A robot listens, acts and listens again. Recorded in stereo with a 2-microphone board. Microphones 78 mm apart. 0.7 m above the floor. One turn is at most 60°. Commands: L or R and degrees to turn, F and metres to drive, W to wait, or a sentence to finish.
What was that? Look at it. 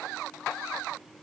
W
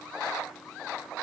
W
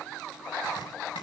L60
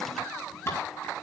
L35
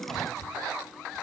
Found it: chopping, straight ahead.